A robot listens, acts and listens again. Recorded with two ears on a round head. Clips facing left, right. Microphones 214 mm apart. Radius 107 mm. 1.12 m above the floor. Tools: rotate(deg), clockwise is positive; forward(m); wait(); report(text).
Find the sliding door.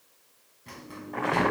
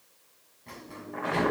rotate(-20)
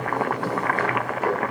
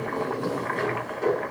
report("Facing the sliding door, over 4 m away.")